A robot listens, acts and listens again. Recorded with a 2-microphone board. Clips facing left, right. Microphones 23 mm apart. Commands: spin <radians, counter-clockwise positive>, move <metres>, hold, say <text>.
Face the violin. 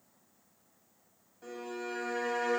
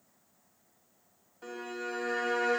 spin -0.35
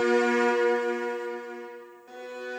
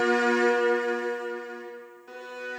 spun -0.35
say Facing the violin.